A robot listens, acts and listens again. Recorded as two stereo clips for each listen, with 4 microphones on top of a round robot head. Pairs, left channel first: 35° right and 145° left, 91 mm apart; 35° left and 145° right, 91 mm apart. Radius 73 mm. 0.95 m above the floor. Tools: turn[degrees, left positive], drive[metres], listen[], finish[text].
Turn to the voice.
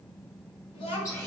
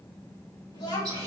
Thought: The child speaking: 15° right.
Action: turn[-15]
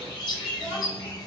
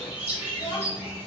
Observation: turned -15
Action: finish[Found it: a child speaking, straight ahead, 1 to 2 m away.]